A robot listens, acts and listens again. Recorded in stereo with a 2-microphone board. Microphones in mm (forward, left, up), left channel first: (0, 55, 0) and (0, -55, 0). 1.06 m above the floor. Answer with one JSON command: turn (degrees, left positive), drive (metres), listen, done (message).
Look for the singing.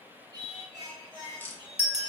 {"turn": -50}
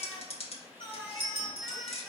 {"turn": -15}
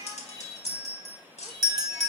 {"turn": -15}
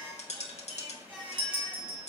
{"done": "Found it: singing, straight ahead, 2 to 4 m away."}